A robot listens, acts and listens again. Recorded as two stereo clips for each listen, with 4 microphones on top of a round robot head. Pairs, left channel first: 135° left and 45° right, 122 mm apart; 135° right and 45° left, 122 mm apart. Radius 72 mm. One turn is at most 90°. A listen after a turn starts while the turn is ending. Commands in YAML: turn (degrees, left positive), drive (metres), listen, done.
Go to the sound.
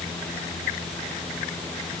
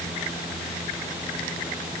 listen: true
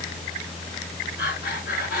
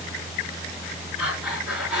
turn: 90
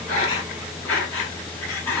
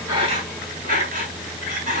turn: 60
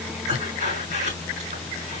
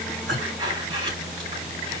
turn: -10
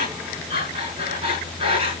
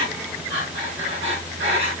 drive: 1.0
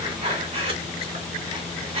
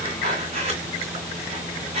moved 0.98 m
drive: 1.0
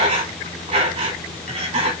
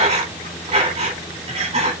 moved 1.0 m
drive: 1.0
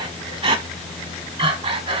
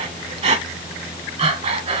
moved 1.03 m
drive: 1.0
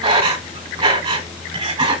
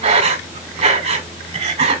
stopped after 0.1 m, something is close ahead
done: "Arrived at the breathing, straight ahead."